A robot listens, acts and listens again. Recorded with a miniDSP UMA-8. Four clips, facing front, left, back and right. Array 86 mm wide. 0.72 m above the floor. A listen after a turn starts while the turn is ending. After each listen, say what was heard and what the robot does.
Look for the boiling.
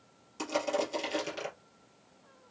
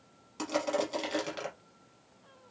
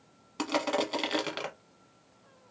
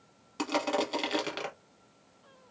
Keep listening.
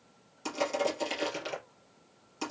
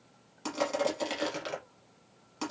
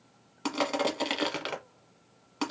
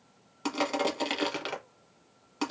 Keep listening.
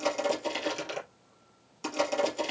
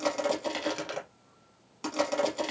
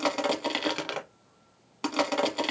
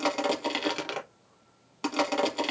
I can't make out boiling, only crushing.